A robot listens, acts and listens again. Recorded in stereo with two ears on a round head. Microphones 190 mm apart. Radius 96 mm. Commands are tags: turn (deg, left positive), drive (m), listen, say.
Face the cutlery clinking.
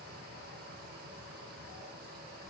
<listen/>
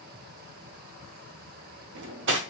<turn deg="-60"/>
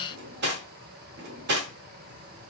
<turn deg="-55"/>
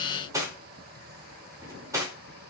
<turn deg="-15"/>
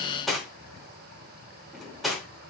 <say>Found it: cutlery clinking, straight ahead, under 1 m away.</say>